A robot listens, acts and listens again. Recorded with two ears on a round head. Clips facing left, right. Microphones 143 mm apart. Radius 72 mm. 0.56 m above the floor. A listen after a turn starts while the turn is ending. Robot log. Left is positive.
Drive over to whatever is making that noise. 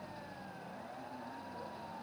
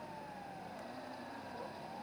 cmd idle
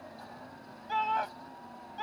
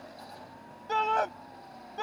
note: The shout: about 60° right or 120° right.
cmd yaw -60
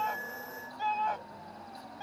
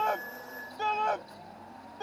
note: So it is at 60° right.
cmd yaw -60
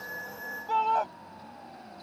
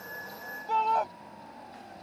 cmd fwd 1.0
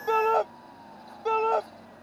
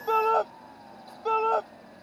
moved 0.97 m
cmd fwd 1.0
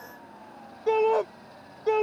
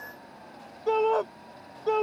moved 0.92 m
note: The shout is now 10° left.
cmd yaw +10
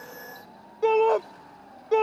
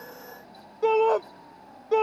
cmd fwd 1.0
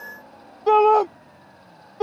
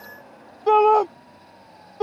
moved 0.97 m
cmd fwd 1.0
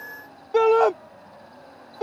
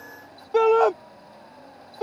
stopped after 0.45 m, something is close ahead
end: I am next to the shout.